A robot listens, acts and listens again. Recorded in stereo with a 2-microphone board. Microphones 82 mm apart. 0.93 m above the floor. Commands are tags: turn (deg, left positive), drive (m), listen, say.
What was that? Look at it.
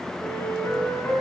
<turn deg="30"/>
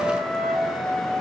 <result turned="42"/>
<turn deg="-10"/>
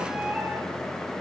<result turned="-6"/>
<say>Found it: a flute, straight ahead.</say>